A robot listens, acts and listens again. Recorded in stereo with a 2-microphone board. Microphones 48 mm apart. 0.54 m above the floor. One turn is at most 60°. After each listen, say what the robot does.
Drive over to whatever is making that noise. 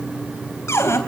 Turn 60° left.
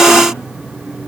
Keep listening.
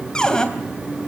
Turn 20° left.
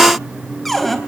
Drive 1.0 m forward.
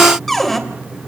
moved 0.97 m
Drive 1.0 m forward.
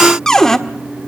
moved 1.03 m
Turn 15° left.
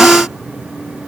Keep listening.
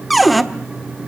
Drive 1.0 m forward.
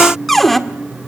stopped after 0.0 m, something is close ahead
Arrived at the cupboard door, straight ahead.